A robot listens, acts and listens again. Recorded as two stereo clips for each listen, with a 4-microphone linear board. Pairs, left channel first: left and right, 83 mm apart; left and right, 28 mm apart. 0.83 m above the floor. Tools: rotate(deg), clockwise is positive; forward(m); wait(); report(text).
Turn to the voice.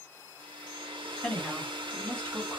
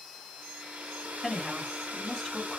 rotate(-15)
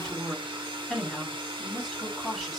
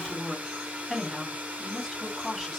report("Found it: a woman speaking, straight ahead.")